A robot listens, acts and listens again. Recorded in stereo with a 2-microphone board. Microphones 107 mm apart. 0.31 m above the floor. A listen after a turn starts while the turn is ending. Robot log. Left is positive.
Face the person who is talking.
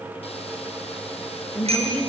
cmd yaw +30
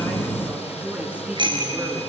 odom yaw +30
note: So it is at 15° right.
cmd yaw -15
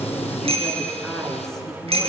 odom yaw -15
end: Found it: a woman speaking, straight ahead.